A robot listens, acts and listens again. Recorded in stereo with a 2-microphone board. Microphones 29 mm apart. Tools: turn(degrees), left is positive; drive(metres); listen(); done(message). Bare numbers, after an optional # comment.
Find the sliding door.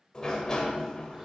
# The sliding door: about 30° left or 150° left.
turn(30)
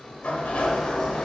# So it is at 120° left.
turn(120)
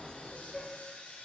done("Facing the sliding door, 1 to 2 m away.")